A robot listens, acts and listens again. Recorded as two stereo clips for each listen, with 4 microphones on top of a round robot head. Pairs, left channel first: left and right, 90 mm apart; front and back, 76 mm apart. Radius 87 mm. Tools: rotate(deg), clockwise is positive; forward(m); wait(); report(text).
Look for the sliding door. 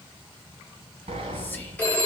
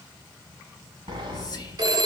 rotate(130)
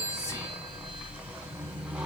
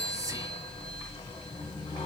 rotate(10)
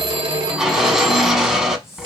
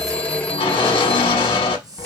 report("Facing the sliding door, under 1 m away.")